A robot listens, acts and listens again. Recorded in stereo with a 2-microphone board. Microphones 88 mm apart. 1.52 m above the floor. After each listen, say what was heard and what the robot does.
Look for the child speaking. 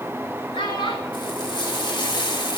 The child speaking: about 70° left or 110° left. Turn 70° left.
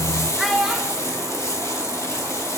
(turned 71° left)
Found it: a child speaking, straight ahead, 2 to 4 m away.